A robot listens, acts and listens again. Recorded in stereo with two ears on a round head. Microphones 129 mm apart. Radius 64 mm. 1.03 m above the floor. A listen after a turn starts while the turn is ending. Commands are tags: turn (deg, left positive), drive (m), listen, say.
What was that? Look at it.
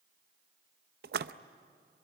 <turn deg="-75"/>
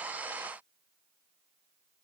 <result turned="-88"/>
<listen/>
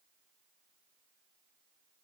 <say>I heard a splash, but can't make it out now. It was about 15° left or 20° right.</say>